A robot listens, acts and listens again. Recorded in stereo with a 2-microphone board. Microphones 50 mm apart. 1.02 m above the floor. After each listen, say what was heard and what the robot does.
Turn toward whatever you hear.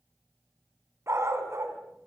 The dog barking: about 70° right or 110° right. Turn 70° right.
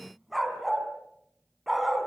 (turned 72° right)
Facing the dog barking.